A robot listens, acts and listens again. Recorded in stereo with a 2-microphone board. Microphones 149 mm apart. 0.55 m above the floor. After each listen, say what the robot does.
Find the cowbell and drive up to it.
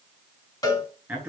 Turn 25° left.
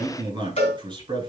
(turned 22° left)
Turn 130° left.
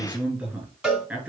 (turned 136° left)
Drive 1.0 m forward.
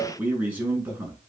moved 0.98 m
Drive 1.0 m forward.
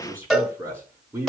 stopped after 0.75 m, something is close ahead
I am next to the cowbell.